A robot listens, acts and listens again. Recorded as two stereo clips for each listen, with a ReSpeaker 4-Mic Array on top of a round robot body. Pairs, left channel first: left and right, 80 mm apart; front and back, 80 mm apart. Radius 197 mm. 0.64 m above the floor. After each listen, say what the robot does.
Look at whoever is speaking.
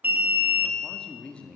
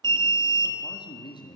Turn 15° left.
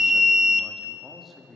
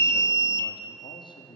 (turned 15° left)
Facing the man speaking, 1 to 2 m away.